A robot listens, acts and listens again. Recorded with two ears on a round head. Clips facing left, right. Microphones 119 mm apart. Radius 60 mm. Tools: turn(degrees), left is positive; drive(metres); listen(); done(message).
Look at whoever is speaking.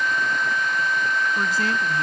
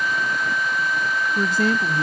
turn(degrees=-90)
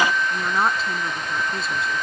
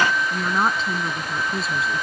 done("Found it: a woman speaking, straight ahead.")